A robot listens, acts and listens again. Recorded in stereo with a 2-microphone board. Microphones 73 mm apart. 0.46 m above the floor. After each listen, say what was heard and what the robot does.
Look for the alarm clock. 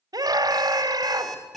Turn 30° left.
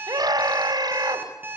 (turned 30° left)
So it is at 30° right. Turn 30° right.
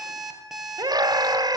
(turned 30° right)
Facing the alarm clock, over 4 m away.